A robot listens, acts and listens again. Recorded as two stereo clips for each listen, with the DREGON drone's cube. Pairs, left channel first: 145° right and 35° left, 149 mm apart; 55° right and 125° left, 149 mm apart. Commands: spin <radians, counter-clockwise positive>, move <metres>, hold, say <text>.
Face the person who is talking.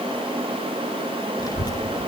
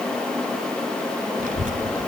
spin 2.62
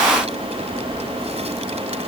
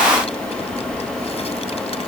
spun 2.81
spin -0.17
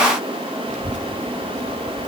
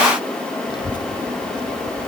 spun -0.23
say Found it: a child speaking, straight ahead.